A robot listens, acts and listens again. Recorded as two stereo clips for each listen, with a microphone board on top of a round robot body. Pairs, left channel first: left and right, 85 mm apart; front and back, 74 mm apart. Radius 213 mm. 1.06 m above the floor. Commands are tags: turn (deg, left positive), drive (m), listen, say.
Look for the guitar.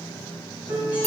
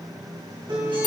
<turn deg="-165"/>
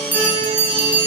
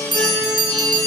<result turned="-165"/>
<turn deg="20"/>
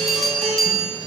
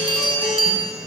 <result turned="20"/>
<say>Facing the guitar.</say>